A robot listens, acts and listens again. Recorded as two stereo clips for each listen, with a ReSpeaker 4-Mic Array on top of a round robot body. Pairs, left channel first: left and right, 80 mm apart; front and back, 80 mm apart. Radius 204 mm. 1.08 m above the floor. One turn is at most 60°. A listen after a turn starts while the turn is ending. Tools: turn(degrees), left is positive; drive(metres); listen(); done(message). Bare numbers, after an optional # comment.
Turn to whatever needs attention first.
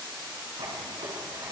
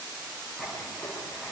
listen()
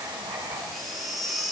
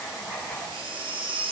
# The baby crying: straight behind.
turn(60)
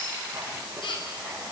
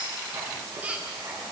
# The baby crying is now 105° left.
turn(60)
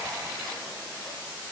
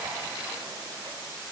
# Nothing new. It was at 45° left.
turn(45)
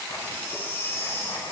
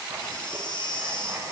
# The baby crying is now 25° left.
turn(25)
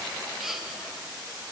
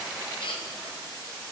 done("Found it: a baby crying, straight ahead, 2 to 4 m away.")